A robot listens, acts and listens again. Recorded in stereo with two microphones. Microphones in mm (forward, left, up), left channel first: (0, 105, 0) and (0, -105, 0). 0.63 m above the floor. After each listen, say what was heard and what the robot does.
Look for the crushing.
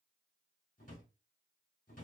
Keep listening.
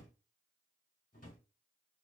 Keep listening.
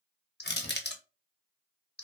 The crushing: about 50° left or 130° left. Turn 50° left.
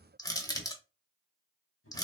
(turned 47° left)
So it is at 20° left. Turn 20° left.
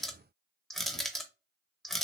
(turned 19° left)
Facing the crushing.